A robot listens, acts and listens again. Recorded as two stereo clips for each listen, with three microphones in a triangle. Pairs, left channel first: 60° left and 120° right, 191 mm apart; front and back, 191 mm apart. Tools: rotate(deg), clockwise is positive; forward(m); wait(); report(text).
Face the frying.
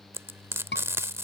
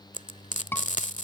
rotate(45)
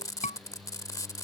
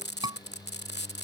rotate(10)
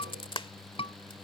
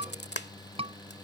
report("Found it: frying, straight ahead.")